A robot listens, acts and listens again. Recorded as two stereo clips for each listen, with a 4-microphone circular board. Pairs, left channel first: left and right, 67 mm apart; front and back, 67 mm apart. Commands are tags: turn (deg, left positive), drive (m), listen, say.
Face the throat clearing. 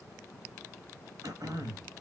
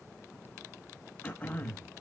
<turn deg="-70"/>
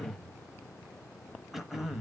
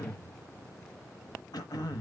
<say>Found it: throat clearing, straight ahead.</say>